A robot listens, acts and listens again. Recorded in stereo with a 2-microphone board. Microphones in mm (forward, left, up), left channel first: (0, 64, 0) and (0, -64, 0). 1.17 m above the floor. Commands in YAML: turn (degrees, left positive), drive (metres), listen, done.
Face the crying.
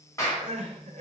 turn: -70
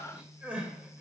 turn: -10
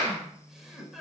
done: "Facing the crying, 1 to 2 m away."